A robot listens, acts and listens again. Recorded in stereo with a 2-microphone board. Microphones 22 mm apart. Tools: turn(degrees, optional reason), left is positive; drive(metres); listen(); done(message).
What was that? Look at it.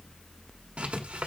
turn(degrees=-70, reason="The writing: about 70° right or 110° right.")
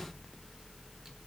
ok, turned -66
listen()
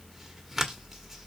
turn(degrees=-10, reason="So it is at 10° right.")
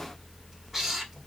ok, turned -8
done("Found it: writing, straight ahead, 1 to 2 m away.")